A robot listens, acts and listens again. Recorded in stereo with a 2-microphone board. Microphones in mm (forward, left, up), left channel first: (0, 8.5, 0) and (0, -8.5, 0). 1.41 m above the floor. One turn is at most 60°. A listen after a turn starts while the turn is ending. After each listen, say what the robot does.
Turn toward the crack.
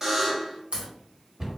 Turn 60° right.
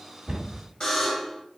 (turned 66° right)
Turn 25° right.
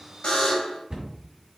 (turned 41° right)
Turn 15° left.
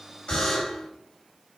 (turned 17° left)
Facing where the crack came from. I can't hear it now.